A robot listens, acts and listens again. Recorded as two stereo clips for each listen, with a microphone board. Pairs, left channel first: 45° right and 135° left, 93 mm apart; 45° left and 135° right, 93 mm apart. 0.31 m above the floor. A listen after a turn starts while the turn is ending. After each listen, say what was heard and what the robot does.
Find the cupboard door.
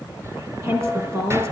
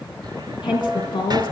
The cupboard door: 170° right. Turn 170° right.
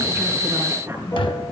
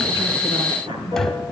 The cupboard door is now 40° right. Turn 40° right.
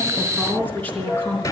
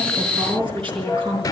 Facing the cupboard door.